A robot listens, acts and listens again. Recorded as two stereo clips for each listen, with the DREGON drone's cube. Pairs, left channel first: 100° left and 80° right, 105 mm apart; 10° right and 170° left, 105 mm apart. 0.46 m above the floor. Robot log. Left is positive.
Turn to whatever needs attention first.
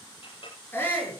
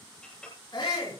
note: The shout: 30° left.
cmd yaw +30
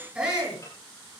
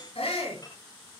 end: Found it: a shout, straight ahead.